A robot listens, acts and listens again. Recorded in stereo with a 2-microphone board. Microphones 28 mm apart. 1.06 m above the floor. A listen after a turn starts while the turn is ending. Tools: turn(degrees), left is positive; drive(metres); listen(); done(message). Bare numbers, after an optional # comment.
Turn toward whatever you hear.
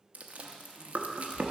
# The chewing: about 55° right or 125° right.
turn(-55)
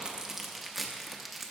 done("Found it: chewing, straight ahead.")